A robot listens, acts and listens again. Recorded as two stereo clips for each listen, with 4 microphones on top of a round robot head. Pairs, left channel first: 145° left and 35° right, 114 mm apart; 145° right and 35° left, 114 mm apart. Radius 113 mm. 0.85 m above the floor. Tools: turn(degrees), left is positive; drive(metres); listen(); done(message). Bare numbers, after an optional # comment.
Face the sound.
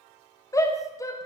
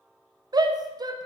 # The shout: 85° left.
turn(85)
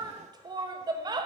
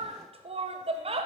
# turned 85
# The shout is now 15° left.
turn(15)
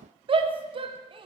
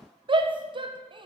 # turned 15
done("Found it: a shout, straight ahead, under 1 m away.")